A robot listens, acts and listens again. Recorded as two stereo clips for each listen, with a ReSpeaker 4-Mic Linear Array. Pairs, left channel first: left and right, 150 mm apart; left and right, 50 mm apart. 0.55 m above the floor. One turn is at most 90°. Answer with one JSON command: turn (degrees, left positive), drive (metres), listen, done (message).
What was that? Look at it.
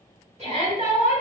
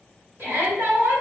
{"turn": -50}
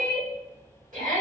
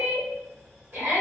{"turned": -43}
{"turn": -75}
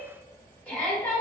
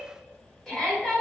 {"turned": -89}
{"turn": 10}
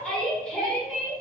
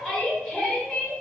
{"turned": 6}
{"done": "Facing the shout."}